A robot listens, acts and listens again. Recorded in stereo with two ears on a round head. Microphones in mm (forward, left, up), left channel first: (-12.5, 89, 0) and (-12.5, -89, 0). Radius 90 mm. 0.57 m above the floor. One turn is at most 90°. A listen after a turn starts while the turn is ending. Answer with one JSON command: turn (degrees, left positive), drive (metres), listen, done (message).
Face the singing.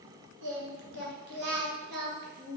{"turn": -55}
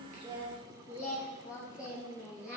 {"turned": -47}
{"done": "Found it: singing, straight ahead, 2 to 4 m away."}